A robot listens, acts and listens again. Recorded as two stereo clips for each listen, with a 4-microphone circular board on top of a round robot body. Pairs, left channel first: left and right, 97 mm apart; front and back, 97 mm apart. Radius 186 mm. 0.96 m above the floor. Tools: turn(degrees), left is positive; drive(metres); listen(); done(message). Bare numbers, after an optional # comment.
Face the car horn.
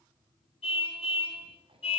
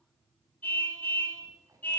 # The car horn: 75° left.
turn(75)
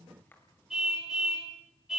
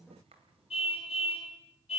done("Facing the car horn.")